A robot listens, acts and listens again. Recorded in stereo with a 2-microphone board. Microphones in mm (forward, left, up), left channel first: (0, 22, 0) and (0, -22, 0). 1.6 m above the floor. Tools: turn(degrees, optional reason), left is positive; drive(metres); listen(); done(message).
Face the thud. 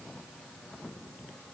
listen()
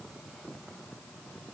listen()
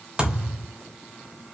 turn(degrees=-25, reason="The thud: about 25° right or 155° right.")
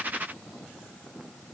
listen()
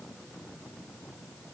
done("I heard a thud, but can't make it out now. It was about straight ahead or 130° right.")